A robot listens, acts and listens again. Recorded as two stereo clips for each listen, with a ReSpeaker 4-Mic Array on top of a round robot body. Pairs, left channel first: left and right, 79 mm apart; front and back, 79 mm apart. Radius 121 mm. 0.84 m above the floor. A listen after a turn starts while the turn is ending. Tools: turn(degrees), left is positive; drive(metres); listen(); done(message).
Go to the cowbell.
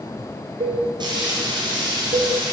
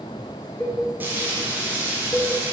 turn(degrees=-75)
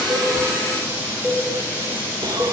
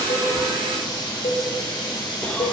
turn(degrees=10)
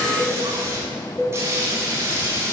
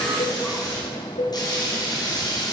drive(metres=1.0)
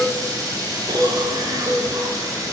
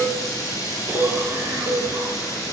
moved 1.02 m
drive(metres=1.0)
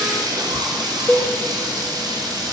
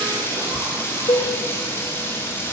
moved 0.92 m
turn(degrees=10)
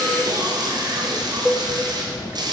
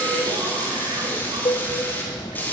drive(metres=1.0)
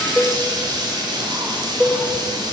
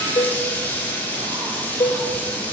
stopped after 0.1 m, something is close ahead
done("Arrived at the cowbell, straight ahead.")